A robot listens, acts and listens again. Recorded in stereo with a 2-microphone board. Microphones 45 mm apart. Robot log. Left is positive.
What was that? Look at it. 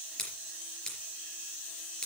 note: The scissors: about 15° left or 165° left.
cmd yaw +15
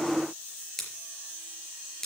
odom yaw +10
cmd yaw +30
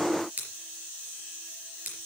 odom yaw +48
note: So it is at 40° right.
cmd yaw -40
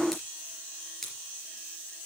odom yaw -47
note: The scissors is now 10° left.
cmd yaw +10
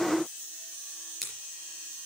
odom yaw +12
end: Facing the scissors, 2 to 4 m away.